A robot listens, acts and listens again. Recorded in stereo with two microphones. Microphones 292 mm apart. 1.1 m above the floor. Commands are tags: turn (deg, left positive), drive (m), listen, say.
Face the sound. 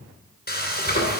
<turn deg="30"/>
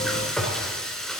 <say>Found it: frying, straight ahead.</say>